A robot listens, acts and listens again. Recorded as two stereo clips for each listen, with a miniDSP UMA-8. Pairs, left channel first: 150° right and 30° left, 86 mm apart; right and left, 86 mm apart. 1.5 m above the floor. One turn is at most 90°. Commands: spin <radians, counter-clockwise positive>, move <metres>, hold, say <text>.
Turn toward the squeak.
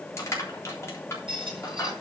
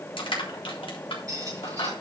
spin 0.70
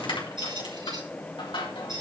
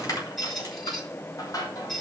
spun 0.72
say Facing the squeak.